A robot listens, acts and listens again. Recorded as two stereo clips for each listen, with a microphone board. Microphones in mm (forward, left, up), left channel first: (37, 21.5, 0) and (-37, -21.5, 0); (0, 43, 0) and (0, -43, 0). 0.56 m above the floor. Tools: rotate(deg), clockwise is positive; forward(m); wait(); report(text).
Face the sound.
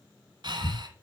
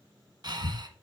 rotate(120)
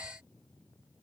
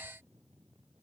wait()
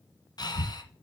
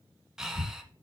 report("Facing the breathing, 1 to 2 m away.")